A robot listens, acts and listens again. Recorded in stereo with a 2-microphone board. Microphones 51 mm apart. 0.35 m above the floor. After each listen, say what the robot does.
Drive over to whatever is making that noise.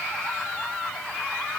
Keep listening.
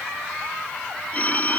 Turn 30° left.
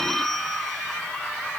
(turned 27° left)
Drive 1.0 m forward.
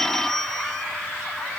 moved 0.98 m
Turn 10° left.
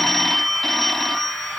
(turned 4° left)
Drive 1.0 m forward.
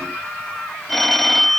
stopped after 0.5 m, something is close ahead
Arrived at the phone ringing, straight ahead.